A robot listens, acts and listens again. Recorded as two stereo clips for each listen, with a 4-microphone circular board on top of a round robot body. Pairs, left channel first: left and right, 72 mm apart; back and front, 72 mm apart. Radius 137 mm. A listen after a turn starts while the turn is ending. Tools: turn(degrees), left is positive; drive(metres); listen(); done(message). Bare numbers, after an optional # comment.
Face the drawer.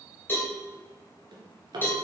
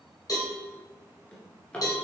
# The drawer: 105° right.
turn(-105)
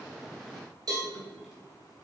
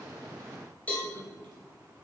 listen()
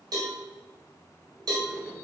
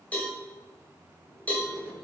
listen()
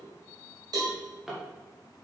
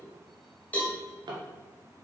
done("Facing the drawer.")